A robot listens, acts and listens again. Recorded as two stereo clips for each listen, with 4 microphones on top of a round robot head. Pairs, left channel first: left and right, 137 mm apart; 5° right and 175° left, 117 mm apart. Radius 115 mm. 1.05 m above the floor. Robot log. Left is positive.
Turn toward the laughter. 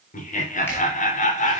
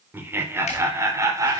note: The laughter: 115° left.
cmd yaw +115
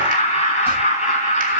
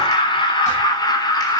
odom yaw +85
note: The laughter is now 50° left.
cmd yaw +50
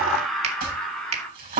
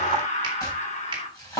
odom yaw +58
end: Facing the laughter, 2 to 4 m away.